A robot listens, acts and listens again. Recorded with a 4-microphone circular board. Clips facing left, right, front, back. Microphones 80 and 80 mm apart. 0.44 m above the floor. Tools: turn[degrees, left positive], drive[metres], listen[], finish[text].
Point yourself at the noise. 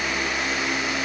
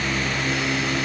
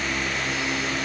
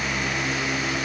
Action: listen[]
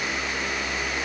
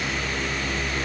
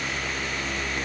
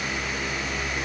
Action: listen[]
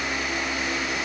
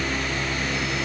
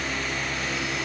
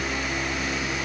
Action: finish[I can't make out anything.]